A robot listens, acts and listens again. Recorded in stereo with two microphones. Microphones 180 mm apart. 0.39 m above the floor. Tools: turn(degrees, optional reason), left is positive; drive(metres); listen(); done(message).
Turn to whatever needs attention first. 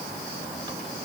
listen()
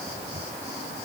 listen()
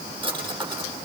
done("I can't make out anything urgent, only a drawer.")